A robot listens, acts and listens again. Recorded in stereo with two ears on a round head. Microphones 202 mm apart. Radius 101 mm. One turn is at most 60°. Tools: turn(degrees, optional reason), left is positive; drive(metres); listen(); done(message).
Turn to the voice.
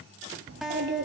turn(degrees=-50, reason="The child speaking: about 50° right or 130° right.")
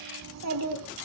turn(degrees=-60, reason="So it is at 80° right.")
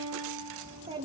turn(degrees=-25, reason="The child speaking is now 25° right.")
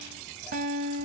listen()
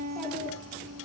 listen()
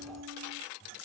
done("Facing where the child speaking came from. I can't hear it now.")